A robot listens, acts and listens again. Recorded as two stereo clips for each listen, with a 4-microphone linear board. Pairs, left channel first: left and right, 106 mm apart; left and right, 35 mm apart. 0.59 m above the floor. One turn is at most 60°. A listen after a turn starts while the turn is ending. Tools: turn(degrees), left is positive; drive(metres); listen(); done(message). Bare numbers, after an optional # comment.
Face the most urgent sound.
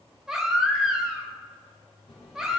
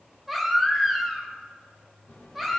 turn(-30)
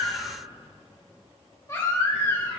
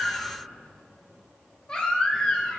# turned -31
# So it is at 25° left.
turn(25)
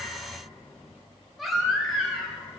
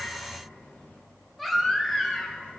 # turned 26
done("Facing the baby crying, 1 to 2 m away.")